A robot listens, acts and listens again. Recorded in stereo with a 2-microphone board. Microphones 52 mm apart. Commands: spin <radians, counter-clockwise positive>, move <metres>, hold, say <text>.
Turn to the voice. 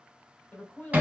spin 0.52
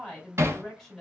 say Found it: a woman speaking, straight ahead, 1 to 2 m away.